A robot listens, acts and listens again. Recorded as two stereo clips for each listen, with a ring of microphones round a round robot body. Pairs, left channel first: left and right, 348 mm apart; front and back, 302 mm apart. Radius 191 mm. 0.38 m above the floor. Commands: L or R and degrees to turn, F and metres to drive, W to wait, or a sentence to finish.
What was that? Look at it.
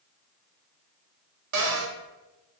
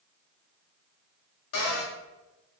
R50
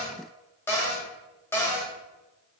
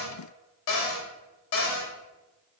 Found it: a cupboard door, straight ahead.